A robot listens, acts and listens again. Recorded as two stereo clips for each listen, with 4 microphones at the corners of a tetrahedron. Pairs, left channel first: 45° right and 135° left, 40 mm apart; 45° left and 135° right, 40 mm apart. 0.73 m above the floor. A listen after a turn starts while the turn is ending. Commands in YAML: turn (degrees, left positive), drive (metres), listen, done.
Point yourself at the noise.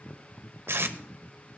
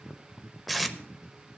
turn: 135
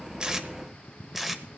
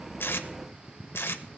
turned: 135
turn: 50
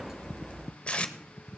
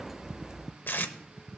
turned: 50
turn: 15
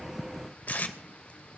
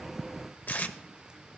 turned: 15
done: "Found it: tape being pulled, straight ahead, under 1 m away."